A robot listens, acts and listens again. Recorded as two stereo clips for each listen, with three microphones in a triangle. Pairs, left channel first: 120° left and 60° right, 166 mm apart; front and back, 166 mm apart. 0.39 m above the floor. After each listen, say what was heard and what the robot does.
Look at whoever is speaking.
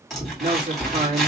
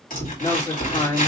The man speaking: 60° right. Turn 60° right.
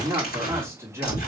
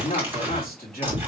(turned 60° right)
The man speaking is now 15° left. Turn 15° left.
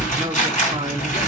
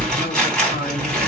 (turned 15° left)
Keep listening.
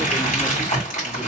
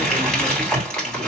Keep listening.
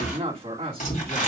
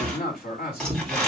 Found it: a man speaking, straight ahead, 2 to 4 m away.